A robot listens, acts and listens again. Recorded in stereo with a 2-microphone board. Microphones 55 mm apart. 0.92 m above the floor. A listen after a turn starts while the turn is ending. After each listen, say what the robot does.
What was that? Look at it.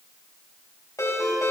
Turn 70° left.
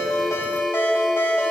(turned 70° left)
Turn 45° left.
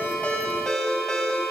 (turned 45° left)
Turn 10° left.
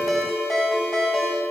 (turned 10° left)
Facing the ringtone.